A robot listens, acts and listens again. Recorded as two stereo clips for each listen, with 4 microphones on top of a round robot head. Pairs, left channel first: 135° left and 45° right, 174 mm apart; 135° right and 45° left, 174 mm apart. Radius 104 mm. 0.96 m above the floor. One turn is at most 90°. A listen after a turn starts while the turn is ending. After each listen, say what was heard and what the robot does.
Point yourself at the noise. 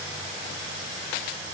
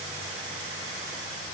Keep listening.
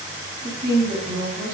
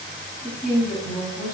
The woman speaking: 60° right. Turn 60° right.
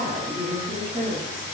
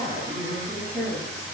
Facing the woman speaking, 1 to 2 m away.